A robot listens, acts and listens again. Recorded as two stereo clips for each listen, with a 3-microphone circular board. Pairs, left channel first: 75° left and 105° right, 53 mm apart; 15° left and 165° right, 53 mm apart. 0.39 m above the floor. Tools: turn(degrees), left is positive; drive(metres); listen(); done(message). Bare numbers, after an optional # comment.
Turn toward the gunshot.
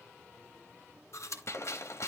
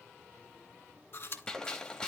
# The gunshot: 90° left.
turn(90)
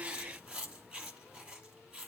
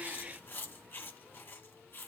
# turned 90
done("I heard a gunshot from this way, but can't make it out now.")